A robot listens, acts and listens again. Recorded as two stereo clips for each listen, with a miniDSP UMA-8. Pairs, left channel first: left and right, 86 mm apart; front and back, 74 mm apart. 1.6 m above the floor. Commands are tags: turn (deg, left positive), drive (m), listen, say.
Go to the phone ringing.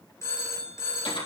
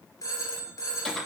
<turn deg="35"/>
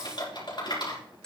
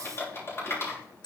<turn deg="10"/>
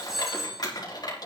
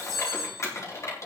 <drive m="1.0"/>
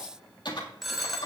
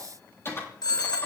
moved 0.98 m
<drive m="1.0"/>
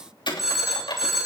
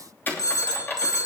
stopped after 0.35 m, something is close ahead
<say>I am next to the phone ringing.</say>